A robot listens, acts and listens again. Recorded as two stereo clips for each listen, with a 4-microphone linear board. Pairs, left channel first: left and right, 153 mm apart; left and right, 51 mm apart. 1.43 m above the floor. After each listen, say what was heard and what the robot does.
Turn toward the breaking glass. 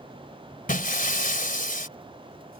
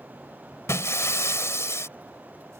The breaking glass: about 65° left or 115° left. Turn 65° left.
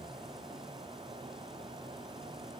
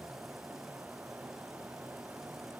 Keep listening.
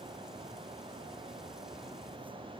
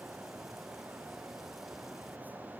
I heard breaking glass, but can't make it out now. It was about straight ahead or 50° left.